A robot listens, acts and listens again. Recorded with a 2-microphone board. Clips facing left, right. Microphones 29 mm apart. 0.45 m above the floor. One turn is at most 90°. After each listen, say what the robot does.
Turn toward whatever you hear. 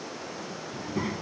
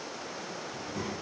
Turn 25° left.
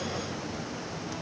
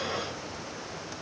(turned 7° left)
Turn 40° left.
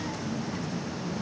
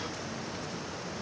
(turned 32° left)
Turn 90° left.
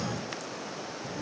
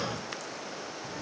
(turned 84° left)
Turn 10° right.
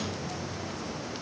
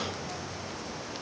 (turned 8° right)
Facing the child speaking.